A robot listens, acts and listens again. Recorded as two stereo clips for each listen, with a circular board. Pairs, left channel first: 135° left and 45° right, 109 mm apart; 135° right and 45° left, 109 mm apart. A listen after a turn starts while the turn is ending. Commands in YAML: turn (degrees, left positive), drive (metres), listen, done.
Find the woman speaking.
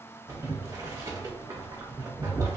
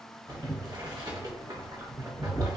listen: true
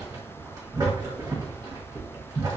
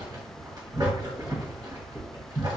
listen: true
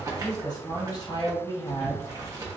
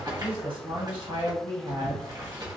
turn: 85
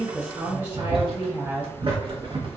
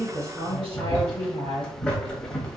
turn: 25
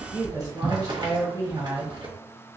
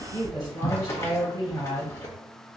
done: "Found it: a woman speaking, straight ahead."